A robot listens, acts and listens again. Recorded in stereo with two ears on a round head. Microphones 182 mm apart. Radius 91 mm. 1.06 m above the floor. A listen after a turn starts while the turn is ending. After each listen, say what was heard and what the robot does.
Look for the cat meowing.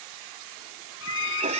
The cat meowing: about 35° right or 145° right. Turn 35° right.
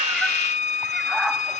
Facing the cat meowing.